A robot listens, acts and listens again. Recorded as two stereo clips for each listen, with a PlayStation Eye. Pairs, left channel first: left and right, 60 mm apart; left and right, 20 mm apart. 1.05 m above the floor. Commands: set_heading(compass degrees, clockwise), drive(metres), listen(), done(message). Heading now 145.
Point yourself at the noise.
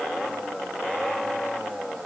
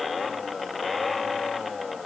listen()
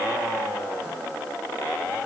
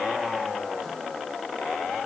listen()
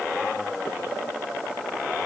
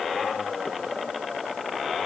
done("I can't make out anything.")